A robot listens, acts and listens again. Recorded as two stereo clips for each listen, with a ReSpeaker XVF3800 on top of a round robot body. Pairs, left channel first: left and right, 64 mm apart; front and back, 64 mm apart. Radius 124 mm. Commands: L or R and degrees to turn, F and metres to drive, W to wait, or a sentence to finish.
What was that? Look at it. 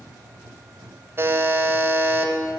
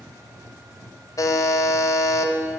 R35
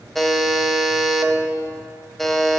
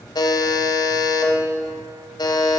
Found it: a buzzer, straight ahead.